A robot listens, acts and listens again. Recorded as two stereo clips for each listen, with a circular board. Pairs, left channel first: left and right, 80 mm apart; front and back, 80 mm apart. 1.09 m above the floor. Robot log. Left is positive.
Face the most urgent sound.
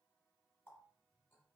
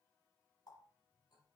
cmd idle
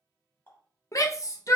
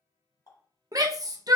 note: The shout: 140° left.
cmd yaw +140
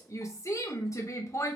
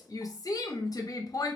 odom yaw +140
note: The shout is now 40° left.
cmd yaw +40
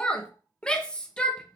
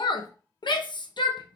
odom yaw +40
note: The shout is now 10° left.
cmd yaw +10
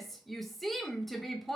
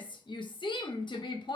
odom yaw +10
end: Found it: a shout, straight ahead.